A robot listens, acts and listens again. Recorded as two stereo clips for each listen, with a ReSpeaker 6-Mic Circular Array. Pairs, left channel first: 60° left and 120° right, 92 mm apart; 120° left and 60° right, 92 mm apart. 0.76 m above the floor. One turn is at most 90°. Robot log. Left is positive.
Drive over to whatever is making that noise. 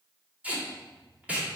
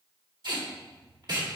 note: The tape being pulled: 50° right.
cmd yaw -50
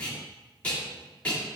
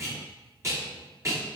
note: The tape being pulled is now 10° right.
cmd yaw -10
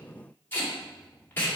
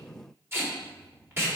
cmd fwd 1.0
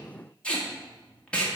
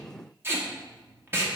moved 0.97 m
note: The tape being pulled is now 10° right.
cmd yaw -10
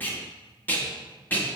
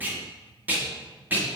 cmd fwd 1.0
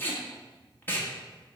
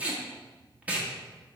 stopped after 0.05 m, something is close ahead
end: Arrived at the tape being pulled, straight ahead.